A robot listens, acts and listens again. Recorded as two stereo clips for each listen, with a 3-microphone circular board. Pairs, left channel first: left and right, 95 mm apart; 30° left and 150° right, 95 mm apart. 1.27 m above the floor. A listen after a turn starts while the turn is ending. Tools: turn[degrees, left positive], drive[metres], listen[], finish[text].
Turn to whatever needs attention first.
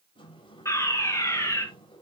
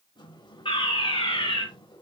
Thought: The fire alarm: 35° left.
Action: turn[35]
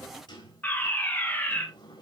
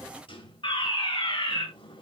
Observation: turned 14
Thought: The fire alarm is now 20° left.
Action: turn[20]
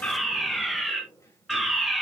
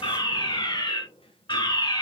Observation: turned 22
Action: finish[Facing the fire alarm.]